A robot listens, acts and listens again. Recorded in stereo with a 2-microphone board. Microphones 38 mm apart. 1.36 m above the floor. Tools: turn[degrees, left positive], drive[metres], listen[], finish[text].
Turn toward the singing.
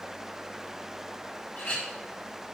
Action: listen[]
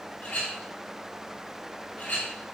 Action: listen[]
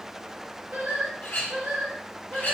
Thought: The singing: about 60° right or 120° right.
Action: turn[-60]
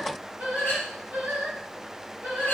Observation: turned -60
Thought: So it is at 60° right.
Action: turn[-60]
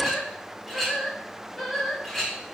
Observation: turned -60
Action: finish[Found it: singing, straight ahead.]